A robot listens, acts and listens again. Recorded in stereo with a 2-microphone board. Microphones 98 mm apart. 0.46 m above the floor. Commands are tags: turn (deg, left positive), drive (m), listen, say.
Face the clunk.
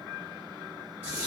<listen/>
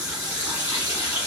<listen/>
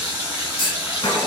<turn deg="60"/>
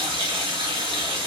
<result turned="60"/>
<listen/>
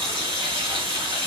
<say>I heard a clunk, but can't make it out now. It was about straight ahead or 60° left.</say>